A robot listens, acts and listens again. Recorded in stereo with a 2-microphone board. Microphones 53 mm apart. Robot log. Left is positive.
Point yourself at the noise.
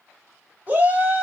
note: The shout: about 30° right or 150° right.
cmd yaw -30
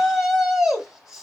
note: So it is at 10° right.
cmd yaw -10
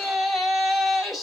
end: Found it: a shout, straight ahead, 1 to 2 m away.